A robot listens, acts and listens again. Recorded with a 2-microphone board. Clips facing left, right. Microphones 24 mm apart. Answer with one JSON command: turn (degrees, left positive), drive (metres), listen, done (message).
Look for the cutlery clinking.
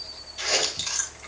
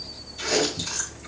{"listen": true}
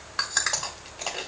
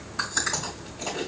{"listen": true}
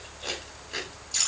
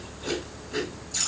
{"done": "I can't make out cutlery clinking to turn to."}